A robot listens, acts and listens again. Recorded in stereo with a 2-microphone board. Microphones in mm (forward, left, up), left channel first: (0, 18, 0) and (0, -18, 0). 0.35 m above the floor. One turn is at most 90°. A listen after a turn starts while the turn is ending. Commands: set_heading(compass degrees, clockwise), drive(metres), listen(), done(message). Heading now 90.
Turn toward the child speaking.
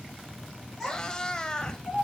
set_heading(60)
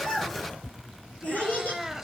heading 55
set_heading(325)
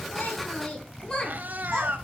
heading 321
set_heading(301)
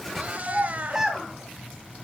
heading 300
set_heading(310)
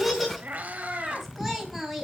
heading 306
done("Found it: a child speaking, straight ahead, 2 to 4 m away.")